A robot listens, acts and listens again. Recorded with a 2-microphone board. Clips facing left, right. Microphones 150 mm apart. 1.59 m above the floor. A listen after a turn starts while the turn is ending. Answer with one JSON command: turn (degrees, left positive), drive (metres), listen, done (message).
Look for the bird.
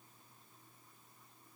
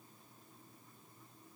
{"listen": true}
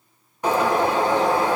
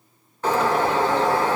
{"turn": 30}
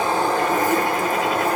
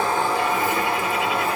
{"turn": 135}
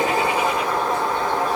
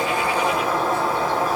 {"done": "Facing the bird, under 1 m away."}